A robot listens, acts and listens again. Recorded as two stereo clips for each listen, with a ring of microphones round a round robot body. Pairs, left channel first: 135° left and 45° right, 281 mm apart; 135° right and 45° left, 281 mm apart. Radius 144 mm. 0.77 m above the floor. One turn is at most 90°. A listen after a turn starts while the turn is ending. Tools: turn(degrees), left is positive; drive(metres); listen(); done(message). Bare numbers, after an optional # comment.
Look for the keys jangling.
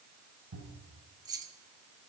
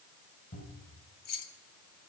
# The keys jangling: 125° right.
turn(-90)
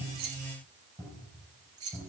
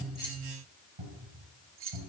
done("Found it: keys jangling, straight ahead.")